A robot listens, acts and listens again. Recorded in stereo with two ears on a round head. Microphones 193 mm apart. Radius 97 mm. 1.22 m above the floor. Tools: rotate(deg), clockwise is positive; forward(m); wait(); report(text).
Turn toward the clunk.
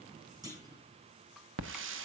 rotate(20)
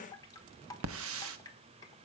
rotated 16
wait()
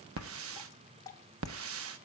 report("I heard a clunk, but can't make it out now. It was about straight ahead or 145° right.")